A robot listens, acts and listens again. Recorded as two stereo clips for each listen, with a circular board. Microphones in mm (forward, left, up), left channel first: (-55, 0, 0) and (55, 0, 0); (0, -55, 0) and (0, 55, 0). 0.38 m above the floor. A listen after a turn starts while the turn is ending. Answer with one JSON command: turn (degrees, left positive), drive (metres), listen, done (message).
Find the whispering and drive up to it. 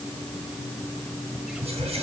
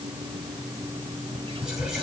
{"drive": 1.0}
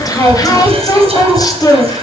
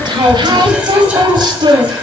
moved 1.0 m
{"listen": true}
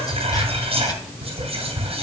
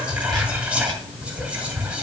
{"turn": 10}
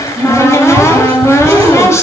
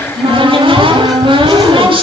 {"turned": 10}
{"listen": true}
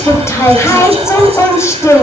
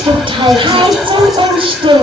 {"drive": 1.0}
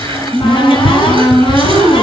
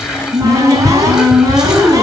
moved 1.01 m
{"drive": 1.0}
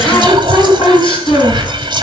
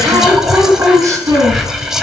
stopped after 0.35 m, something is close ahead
{"done": "I am next to the whispering."}